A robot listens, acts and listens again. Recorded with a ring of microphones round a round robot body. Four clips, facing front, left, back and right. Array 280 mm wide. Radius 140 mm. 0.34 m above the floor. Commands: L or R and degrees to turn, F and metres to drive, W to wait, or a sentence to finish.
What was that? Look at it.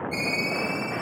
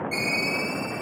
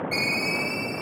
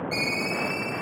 L165
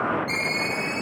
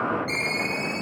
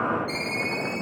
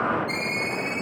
L50
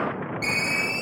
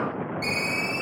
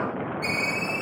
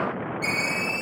Facing the ringtone.